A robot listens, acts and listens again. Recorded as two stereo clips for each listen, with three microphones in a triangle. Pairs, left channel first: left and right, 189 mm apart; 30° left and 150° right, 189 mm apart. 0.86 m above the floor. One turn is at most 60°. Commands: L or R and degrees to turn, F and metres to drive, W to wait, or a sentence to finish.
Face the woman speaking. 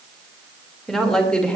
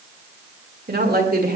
L60
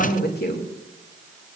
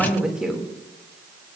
L60
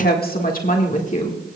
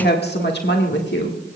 L40
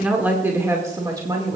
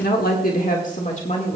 R25
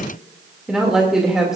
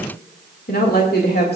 Found it: a woman speaking, straight ahead.